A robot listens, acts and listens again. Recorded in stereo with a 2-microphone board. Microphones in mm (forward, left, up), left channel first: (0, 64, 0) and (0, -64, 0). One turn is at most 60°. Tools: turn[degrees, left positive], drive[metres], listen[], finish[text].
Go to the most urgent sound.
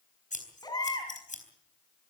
Thought: The baby crying: about 30° left or 150° left.
Action: turn[30]
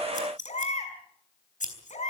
Thought: So it is at 120° left.
Action: turn[60]
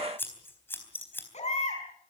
Thought: The baby crying is now 60° left.
Action: turn[60]
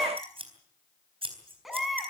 Action: drive[1.0]
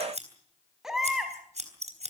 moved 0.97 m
Action: drive[1.0]
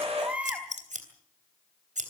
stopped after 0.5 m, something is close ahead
Thought: The baby crying is now 10° right.
Action: turn[-10]
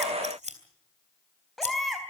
Action: finish[Blocked. The baby crying is further on, straight ahead.]